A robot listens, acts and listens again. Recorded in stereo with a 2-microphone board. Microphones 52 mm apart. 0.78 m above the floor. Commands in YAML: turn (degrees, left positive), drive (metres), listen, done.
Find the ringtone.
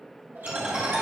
turn: -20
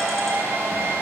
done: "Facing the ringtone."